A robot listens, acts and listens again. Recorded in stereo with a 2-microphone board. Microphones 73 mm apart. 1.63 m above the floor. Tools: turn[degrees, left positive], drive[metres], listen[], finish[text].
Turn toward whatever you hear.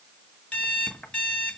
Thought: The alarm clock: about 20° left or 160° left.
Action: turn[20]
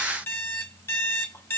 Thought: So it is at 140° left.
Action: turn[140]
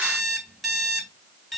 Action: finish[Facing the alarm clock, 1 to 2 m away.]